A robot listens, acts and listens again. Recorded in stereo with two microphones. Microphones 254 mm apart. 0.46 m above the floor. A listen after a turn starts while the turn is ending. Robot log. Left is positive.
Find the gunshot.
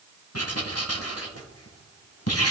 cmd idle
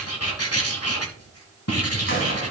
note: The gunshot: about 50° left or 130° left.
cmd yaw +50
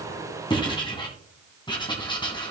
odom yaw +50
cmd idle
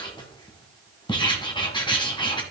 end: I heard a gunshot, but can't make it out now. It was about straight ahead or 80° left.